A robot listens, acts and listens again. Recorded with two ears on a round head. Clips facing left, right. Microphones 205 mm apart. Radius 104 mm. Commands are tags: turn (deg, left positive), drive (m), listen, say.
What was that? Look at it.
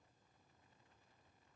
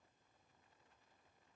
<listen/>
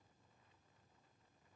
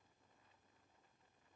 <listen/>
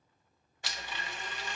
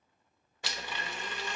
<turn deg="-60"/>
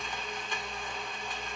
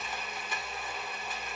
<say>Facing the blender.</say>